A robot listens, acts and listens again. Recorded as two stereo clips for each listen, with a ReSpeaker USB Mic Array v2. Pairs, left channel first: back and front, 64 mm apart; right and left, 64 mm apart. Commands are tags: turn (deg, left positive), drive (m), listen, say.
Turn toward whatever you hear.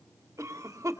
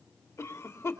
<turn deg="-45"/>
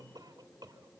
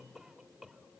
<say>Found it: a cough, straight ahead, 2 to 4 m away.</say>